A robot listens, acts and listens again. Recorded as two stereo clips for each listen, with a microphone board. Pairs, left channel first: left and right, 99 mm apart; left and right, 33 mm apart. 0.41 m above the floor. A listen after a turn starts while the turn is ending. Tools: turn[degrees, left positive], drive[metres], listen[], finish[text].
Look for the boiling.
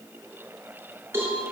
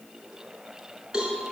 Action: listen[]
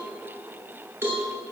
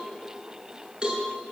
Action: listen[]
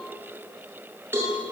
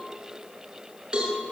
Action: finish[I can't make out boiling, only a cowbell.]